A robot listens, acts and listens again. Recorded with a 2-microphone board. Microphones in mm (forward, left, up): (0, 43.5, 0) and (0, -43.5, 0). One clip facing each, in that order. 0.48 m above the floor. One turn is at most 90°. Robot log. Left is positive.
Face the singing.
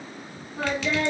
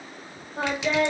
note: The singing: about 60° right or 120° right.
cmd yaw -60
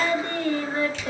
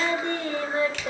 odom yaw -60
note: So it is at 20° right.
cmd yaw -20
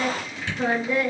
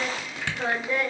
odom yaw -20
end: Found it: singing, straight ahead, 1 to 2 m away.